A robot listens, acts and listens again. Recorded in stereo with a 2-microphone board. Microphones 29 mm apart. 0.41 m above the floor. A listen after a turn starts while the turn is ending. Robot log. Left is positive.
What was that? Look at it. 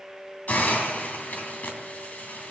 note: The hiss: about 70° left or 110° left.
cmd yaw +70
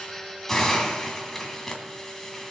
note: So it is at 10° left.
cmd yaw +10
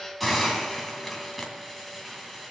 end: Found it: a hiss, straight ahead.